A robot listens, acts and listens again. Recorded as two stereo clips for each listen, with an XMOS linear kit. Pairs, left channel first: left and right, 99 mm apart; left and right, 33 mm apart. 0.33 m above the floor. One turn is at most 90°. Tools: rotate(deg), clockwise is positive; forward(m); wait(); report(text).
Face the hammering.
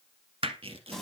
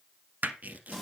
rotate(65)
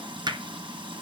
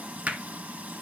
rotate(50)
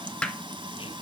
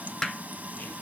rotate(-10)
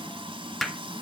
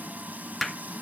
report("Facing the hammering, 1 to 2 m away.")